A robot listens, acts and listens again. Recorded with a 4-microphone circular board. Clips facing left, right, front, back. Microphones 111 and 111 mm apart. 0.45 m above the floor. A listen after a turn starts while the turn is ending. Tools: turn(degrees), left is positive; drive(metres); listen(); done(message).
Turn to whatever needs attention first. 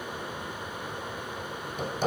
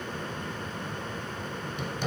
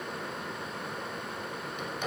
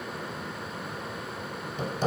listen()
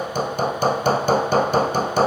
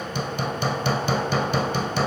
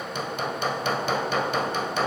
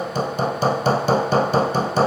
listen()
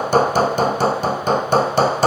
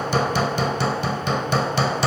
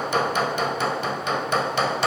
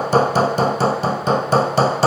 done("I can't make out anything urgent, only hammering.")